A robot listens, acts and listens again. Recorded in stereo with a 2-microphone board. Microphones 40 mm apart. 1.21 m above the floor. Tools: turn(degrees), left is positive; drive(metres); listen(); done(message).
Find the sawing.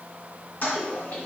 listen()
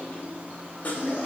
turn(degrees=45)
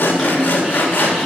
turn(degrees=75)
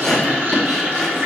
turn(degrees=10)
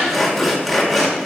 done("Facing the sawing.")